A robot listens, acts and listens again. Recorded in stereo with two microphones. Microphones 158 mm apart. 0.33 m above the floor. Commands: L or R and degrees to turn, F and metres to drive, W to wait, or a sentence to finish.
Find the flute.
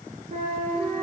R65
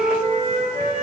R45
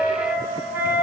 R15
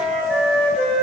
Found it: a flute, straight ahead.